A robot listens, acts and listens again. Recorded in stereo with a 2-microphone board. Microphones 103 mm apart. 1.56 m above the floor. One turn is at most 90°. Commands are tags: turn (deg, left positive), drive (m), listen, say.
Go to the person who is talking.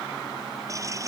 <listen/>
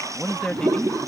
<turn deg="30"/>
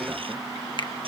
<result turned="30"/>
<listen/>
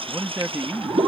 <turn deg="-20"/>
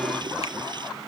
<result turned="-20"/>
<listen/>
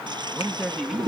<drive m="1.0"/>
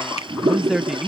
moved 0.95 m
<drive m="1.0"/>
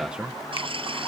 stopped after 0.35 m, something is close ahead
<turn deg="-10"/>
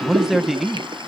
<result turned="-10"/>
<say>Arrived at the man speaking, straight ahead.</say>